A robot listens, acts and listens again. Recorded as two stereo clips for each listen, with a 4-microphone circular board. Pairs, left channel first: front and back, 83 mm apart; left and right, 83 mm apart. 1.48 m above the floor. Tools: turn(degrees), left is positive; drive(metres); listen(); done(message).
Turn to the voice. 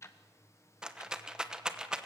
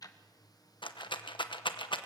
listen()
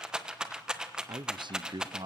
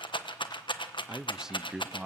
turn(degrees=-170)
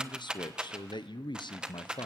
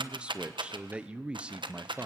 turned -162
turn(degrees=-10)
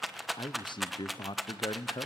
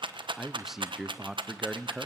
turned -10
done("Found it: a man speaking, straight ahead.")